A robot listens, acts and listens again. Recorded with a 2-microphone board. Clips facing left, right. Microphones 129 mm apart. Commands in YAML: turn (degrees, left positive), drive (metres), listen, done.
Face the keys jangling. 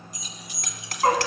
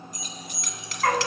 turn: -50
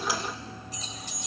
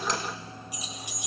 turn: -15
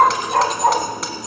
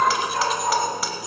listen: true
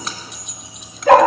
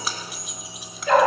done: "Found it: keys jangling, straight ahead."